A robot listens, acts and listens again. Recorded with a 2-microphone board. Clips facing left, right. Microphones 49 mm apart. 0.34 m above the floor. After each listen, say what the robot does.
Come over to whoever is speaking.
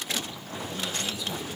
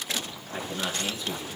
Turn 50° right.
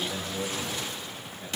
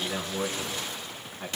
Turn 80° right.
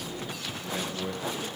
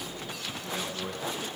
Turn 10° right.
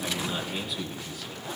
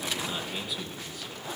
Drive 1.0 m forward.
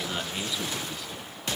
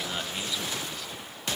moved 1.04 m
Drive 1.0 m forward.
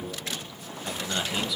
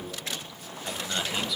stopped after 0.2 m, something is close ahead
Arrived at the man speaking, straight ahead.